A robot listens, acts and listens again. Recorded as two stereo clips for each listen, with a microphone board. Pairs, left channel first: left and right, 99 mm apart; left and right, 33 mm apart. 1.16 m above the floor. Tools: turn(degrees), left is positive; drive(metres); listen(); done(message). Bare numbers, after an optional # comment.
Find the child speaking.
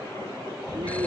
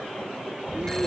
# The child speaking: about 45° right or 135° right.
turn(-45)
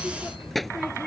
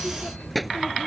done("Facing the child speaking.")